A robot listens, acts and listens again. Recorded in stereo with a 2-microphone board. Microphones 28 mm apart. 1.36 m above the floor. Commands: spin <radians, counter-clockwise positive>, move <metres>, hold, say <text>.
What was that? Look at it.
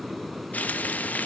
spin 1.05
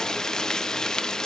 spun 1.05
spin 0.35
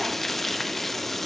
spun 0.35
say Found it: frying, straight ahead.